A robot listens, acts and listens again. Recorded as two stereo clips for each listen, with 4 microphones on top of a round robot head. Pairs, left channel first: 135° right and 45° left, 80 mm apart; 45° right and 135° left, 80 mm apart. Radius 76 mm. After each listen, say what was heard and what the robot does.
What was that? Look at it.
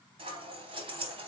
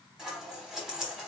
The scissors: 50° left. Turn 50° left.
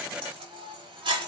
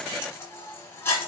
The scissors is now 20° left. Turn 20° left.
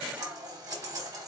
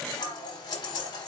Found it: scissors, straight ahead.